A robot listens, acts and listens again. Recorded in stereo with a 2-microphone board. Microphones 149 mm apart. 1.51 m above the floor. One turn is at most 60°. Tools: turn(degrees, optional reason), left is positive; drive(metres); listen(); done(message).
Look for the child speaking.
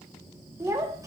turn(degrees=-20, reason="The child speaking: about 20° right or 160° right.")
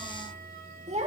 turn(degrees=-60, reason="So it is at 130° right.")
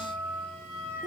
turn(degrees=-60, reason="Nothing new. It was at 70° right.")
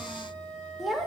done("Found it: a child speaking, straight ahead, 2 to 4 m away.")